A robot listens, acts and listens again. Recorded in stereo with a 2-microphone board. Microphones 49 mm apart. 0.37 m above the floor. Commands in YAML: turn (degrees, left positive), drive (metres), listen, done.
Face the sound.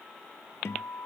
turn: 70
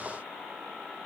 listen: true
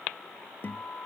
turn: 45
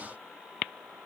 listen: true
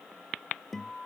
done: "Found it: a guitar, straight ahead."